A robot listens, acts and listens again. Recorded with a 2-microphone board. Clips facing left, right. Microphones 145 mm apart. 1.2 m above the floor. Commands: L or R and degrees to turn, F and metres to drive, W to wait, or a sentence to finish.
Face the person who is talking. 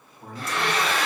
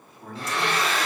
L15
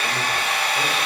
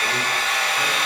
W
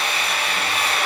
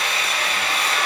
W
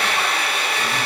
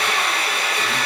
I heard a man speaking, but can't make it out now. It was about straight ahead or 150° left.